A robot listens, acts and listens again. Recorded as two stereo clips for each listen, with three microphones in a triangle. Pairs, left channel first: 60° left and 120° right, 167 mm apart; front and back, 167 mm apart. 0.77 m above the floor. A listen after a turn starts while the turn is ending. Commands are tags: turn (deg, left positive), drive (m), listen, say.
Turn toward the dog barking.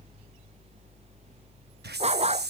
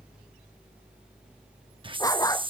<turn deg="-70"/>
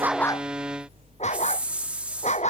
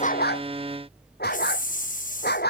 <turn deg="15"/>
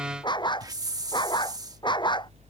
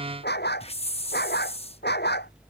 <say>Facing the dog barking.</say>